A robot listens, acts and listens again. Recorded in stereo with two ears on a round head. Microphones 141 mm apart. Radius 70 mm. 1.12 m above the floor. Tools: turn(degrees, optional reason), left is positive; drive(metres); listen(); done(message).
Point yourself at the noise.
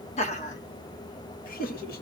turn(degrees=60, reason="The laughter: about 60° left or 120° left.")
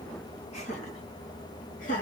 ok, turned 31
turn(degrees=50, reason="So it is at 50° left.")
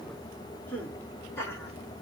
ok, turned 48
turn(degrees=15, reason="The laughter is now 15° left.")
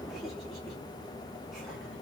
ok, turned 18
listen()
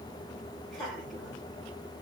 done("Facing the laughter.")